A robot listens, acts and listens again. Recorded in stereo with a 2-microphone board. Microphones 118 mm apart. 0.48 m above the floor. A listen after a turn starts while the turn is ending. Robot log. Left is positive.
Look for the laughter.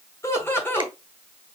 note: The laughter: about 20° left or 160° left.
cmd yaw +20
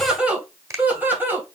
note: So it is at 15° right.
cmd yaw -15
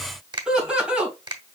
note: The laughter is now 10° right.
cmd yaw -10
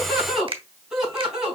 end: Found it: laughter, straight ahead, 2 to 4 m away.